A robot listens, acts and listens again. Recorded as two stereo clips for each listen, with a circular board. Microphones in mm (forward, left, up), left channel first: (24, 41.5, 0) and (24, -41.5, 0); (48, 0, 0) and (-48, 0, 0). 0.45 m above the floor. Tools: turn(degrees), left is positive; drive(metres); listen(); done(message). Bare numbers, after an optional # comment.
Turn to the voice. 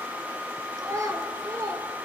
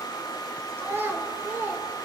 # The child speaking: 120° right.
turn(-120)
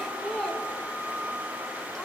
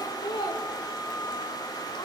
# The child speaking is now 10° left.
turn(10)
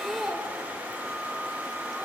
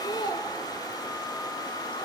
done("Found it: a child speaking, straight ahead, under 1 m away.")